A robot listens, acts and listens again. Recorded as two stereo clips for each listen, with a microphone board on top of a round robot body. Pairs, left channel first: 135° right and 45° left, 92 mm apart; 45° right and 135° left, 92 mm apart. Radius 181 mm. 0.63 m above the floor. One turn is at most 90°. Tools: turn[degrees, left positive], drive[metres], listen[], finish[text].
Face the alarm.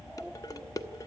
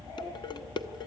Action: listen[]
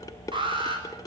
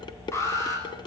Thought: The alarm: 15° left.
Action: turn[15]
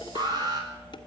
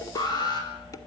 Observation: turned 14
Action: finish[Found it: an alarm, straight ahead, over 4 m away.]